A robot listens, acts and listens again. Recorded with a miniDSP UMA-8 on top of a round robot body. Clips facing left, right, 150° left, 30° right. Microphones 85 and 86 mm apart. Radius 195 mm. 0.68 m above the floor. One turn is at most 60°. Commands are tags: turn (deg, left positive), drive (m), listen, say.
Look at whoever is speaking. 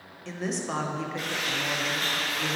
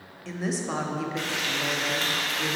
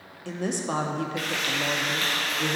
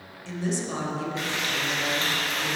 <turn deg="60"/>
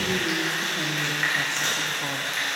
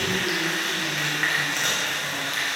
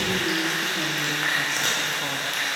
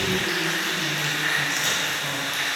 <turn deg="60"/>
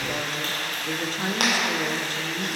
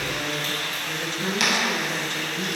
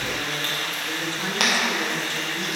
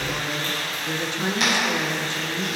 <turn deg="40"/>
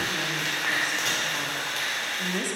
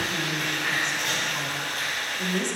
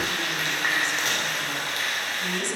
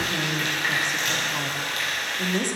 <turn deg="10"/>
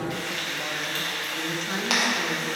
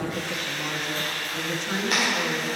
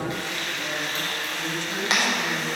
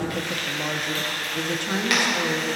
<say>Found it: a woman speaking, straight ahead, 1 to 2 m away.</say>